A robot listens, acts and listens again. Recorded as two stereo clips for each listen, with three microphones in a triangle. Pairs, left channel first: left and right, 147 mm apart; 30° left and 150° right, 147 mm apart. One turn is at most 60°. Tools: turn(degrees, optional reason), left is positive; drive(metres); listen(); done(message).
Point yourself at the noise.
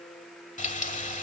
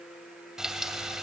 turn(degrees=60, reason="The frying: 125° left.")
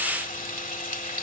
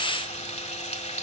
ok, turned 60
turn(degrees=60, reason="The frying is now 70° left.")
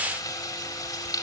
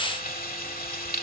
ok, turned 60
turn(degrees=25, reason="The frying is now 25° left.")
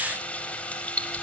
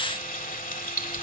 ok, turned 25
turn(degrees=10, reason="The frying is now 10° left.")
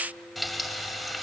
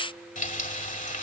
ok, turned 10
done("Facing the frying.")